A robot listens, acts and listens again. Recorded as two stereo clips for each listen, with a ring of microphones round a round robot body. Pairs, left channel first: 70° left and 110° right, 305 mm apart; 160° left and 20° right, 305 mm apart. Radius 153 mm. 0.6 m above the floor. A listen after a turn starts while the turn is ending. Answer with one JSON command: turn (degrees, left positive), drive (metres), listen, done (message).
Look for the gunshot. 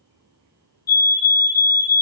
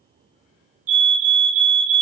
{"listen": true}
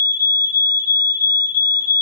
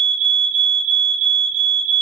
{"listen": true}
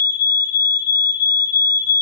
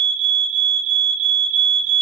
{"done": "I can't make out a gunshot, only a fire alarm."}